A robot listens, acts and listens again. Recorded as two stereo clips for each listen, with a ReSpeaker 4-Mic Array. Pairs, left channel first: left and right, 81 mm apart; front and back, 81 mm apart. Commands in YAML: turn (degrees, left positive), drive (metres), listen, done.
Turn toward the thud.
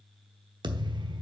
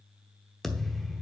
turn: -85
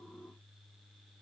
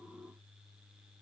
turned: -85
done: "I heard a thud from this way, but can't make it out now."